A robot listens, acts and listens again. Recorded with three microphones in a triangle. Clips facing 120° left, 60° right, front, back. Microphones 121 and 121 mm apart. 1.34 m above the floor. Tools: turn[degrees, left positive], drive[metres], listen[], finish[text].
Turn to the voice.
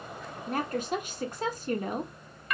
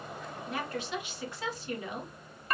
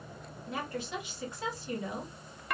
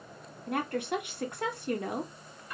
Thought: The woman speaking: 160° left.
Action: turn[160]
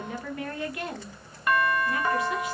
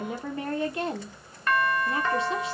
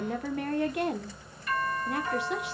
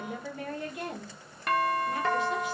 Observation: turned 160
Action: finish[Found it: a woman speaking, straight ahead.]